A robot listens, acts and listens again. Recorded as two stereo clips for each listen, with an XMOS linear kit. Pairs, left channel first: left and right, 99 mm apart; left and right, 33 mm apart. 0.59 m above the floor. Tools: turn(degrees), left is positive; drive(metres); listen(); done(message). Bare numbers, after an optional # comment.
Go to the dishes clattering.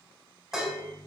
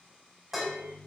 turn(-30)
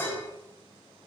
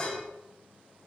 # So it is at 25° left.
turn(25)
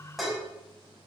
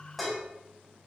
drive(1.0)
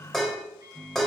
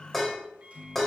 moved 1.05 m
drive(1.0)
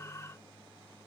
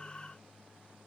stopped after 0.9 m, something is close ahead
listen()
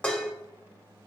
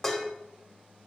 # The dishes clattering is now 10° left.
turn(10)
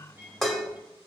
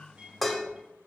done("Arrived at the dishes clattering, straight ahead.")